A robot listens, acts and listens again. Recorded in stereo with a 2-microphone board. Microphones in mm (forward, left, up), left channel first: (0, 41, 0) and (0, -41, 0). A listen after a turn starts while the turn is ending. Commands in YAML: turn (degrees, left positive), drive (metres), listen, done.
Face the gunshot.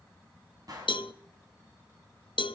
turn: -45
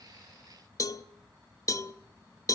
listen: true
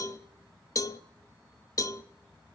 done: "I heard a gunshot, but can't make it out now. It was about straight ahead or 90° right."